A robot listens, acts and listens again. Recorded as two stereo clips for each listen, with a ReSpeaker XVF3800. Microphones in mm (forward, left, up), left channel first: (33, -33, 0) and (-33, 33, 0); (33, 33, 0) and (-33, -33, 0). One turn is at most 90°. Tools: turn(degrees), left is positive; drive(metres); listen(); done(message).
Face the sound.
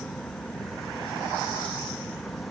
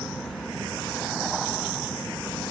listen()
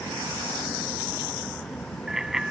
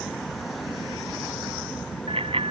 turn(degrees=-90)
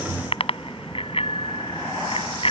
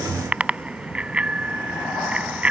turn(degrees=-60)
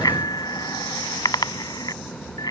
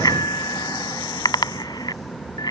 done("Found it: a bicycle bell, straight ahead.")